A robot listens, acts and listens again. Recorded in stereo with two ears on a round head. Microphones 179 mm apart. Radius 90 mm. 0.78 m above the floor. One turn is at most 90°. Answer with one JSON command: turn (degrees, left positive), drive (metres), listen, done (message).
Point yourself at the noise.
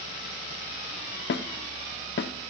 {"turn": 60}
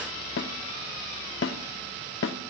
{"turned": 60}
{"turn": 65}
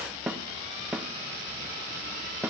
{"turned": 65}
{"done": "Facing the snare drum, under 1 m away."}